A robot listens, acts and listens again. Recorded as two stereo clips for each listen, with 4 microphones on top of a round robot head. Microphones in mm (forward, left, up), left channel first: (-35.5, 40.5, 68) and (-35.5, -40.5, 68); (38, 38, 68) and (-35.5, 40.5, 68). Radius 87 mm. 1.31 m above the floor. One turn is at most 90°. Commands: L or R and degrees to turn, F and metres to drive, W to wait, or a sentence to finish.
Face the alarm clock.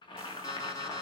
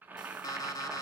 L35
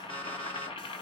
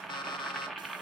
L10
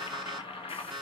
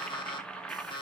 Found it: an alarm clock, straight ahead, 1 to 2 m away.